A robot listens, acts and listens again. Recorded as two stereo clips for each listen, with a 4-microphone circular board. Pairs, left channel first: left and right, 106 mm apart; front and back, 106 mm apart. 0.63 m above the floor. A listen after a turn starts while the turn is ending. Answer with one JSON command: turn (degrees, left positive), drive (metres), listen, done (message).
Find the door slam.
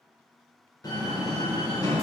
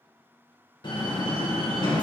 {"turn": 40}
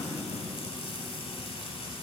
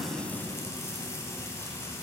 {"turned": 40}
{"done": "Facing where the door slam came from. I can't hear it now."}